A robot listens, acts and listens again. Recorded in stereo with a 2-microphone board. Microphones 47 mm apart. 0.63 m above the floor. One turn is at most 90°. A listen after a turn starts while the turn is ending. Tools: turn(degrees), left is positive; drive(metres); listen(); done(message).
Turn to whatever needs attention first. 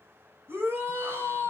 turn(degrees=-60)
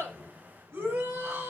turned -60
turn(degrees=-65)
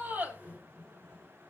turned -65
listen()
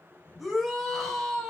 done("Facing the shout, over 4 m away.")